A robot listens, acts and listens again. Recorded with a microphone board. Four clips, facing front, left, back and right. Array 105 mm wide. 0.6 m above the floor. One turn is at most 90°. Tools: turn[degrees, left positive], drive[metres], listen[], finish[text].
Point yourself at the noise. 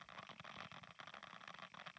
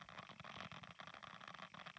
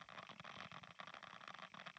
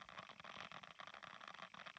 Action: listen[]
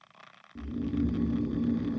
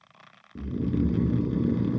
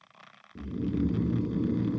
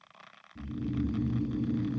Thought: The snoring: 100° left.
Action: turn[90]
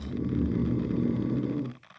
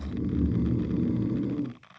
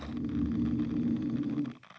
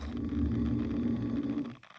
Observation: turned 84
Thought: The snoring is now 15° left.
Action: turn[15]
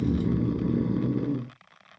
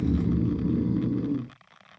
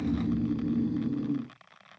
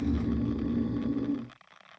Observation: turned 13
Action: finish[Found it: snoring, straight ahead.]